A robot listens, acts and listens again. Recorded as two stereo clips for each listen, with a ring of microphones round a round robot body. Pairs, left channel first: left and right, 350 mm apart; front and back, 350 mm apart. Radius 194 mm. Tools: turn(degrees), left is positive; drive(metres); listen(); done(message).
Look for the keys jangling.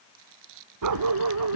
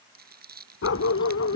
turn(degrees=80)
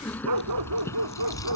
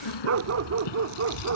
turn(degrees=10)
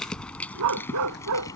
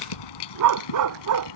turn(degrees=10)
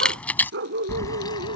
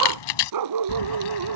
turn(degrees=10)
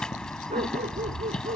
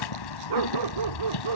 done("Facing the keys jangling.")